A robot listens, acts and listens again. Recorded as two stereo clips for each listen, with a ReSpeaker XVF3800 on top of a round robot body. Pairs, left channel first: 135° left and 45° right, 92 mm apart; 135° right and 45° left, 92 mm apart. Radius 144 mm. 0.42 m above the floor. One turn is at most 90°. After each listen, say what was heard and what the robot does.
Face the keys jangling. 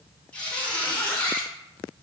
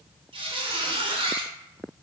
Keep listening.
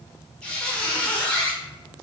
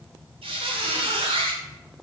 Keep listening.
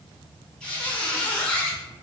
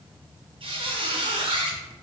I can't make out keys jangling to turn to.